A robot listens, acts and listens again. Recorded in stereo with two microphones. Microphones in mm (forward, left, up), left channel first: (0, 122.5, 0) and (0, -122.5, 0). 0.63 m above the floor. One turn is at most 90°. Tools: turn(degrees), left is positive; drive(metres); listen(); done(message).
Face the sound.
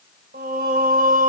turn(degrees=-35)
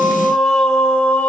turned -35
done("Facing the singing.")